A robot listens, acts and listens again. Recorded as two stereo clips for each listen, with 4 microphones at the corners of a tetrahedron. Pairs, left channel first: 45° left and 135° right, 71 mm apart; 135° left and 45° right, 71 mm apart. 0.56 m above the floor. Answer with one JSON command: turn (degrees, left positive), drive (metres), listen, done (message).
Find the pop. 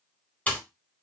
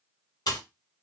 {"turn": 115}
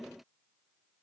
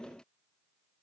{"done": "I heard a pop from this way, but can't make it out now."}